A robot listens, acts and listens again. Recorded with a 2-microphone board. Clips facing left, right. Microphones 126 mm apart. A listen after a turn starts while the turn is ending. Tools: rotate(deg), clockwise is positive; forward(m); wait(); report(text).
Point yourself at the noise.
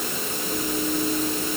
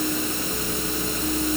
wait()
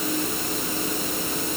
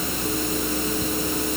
wait()
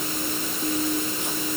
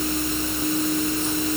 report("I can't make out anything to turn to.")